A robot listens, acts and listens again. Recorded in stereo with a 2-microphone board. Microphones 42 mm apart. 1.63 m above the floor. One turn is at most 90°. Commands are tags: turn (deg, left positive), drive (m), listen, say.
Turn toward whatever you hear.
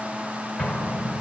<turn deg="20"/>
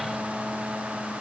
<listen/>
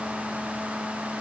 <say>I heard an explosion, but can't make it out now. It was about straight ahead or 140° left.</say>